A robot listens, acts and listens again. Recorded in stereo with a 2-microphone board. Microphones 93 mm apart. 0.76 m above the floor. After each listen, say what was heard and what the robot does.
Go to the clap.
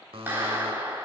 The clap: about 25° right or 155° right. Turn 25° right.
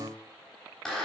Drive 1.0 m forward.
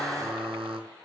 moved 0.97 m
Drive 1.0 m forward.
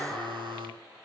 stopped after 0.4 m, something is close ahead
The clap is now 10° left. Turn 10° left.
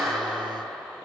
Blocked. The clap is further on, straight ahead.